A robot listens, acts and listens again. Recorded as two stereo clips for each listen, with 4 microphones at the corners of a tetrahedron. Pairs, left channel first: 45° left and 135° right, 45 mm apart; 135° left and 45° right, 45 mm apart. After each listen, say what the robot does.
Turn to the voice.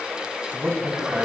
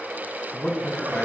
Turn 180° left.
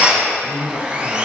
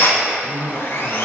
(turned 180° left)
Turn 55° left.
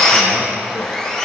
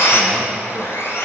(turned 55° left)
Keep listening.
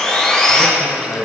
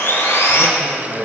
Turn 10° left.
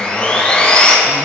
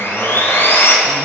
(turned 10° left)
Keep listening.
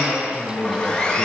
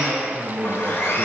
Found it: a man speaking, straight ahead, 2 to 4 m away.